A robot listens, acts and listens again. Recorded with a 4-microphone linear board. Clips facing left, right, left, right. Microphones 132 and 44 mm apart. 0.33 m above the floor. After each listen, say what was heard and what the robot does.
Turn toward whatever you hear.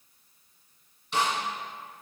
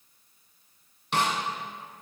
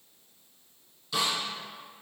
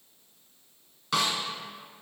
The snare drum: about 70° right or 110° right. Turn 70° right.
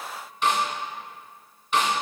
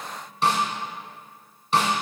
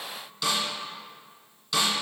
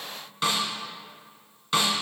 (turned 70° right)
So it is at 35° right. Turn 35° right.
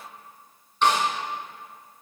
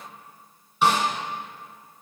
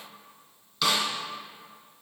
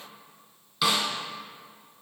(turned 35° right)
The snare drum is now 10° right. Turn 10° right.
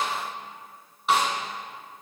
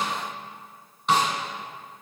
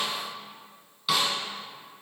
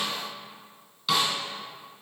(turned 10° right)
Facing the snare drum.